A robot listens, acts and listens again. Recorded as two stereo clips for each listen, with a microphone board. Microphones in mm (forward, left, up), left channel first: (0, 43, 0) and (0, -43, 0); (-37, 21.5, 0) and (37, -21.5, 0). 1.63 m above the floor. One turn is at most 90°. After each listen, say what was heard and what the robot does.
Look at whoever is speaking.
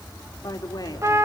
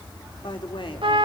The woman speaking: 130° left. Turn 90° left.
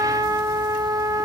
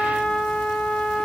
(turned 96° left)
Nothing new. It was at 35° left. Turn 35° left.
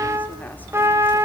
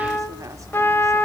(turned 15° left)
Nothing new. It was at 20° left. Turn 20° left.
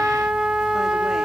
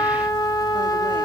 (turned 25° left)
I heard a woman speaking from this way, but can't make it out now.